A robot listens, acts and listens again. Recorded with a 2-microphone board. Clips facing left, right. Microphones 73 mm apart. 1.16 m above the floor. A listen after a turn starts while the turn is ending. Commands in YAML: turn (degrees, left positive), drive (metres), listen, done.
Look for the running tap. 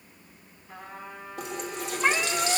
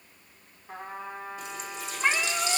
turn: 90
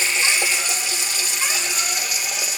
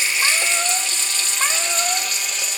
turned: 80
turn: 10
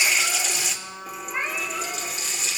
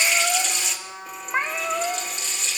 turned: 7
done: "Facing the running tap, 1 to 2 m away."